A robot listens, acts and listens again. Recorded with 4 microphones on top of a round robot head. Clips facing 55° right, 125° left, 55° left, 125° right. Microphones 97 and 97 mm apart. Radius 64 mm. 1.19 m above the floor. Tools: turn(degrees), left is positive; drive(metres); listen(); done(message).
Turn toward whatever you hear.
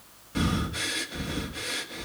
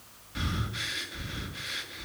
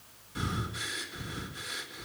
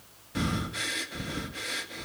turn(degrees=-100)
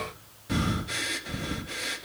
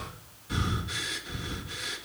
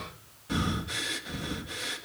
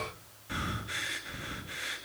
turn(degrees=-15)
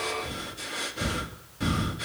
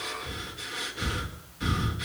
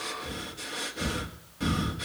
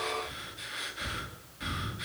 done("Facing the breathing.")